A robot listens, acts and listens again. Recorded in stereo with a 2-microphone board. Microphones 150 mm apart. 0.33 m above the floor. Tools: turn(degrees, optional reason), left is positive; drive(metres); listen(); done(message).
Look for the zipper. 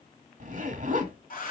turn(degrees=-55, reason="The zipper: about 55° right or 125° right.")
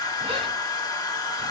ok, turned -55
listen()
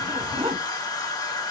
turn(degrees=-45, reason="So it is at 45° right.")
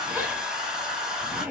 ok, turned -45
turn(degrees=-10, reason="The zipper is now 10° right.")
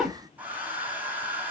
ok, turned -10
done("Found it: a zipper, straight ahead.")